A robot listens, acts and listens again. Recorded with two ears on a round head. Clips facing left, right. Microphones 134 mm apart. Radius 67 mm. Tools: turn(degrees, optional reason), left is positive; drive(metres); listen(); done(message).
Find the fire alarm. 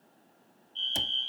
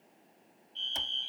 turn(degrees=-30)
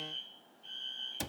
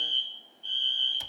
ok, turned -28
turn(degrees=-140, reason="So it is at 140° right.")
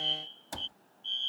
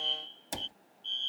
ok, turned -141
done("Found it: a fire alarm, straight ahead.")